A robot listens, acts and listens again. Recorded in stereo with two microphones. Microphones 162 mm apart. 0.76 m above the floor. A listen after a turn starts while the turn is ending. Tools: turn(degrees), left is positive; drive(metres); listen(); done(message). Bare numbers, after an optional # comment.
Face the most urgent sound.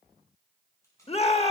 # The shout: about 40° left or 140° left.
turn(40)
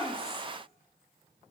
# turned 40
listen()
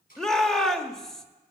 done("Facing the shout.")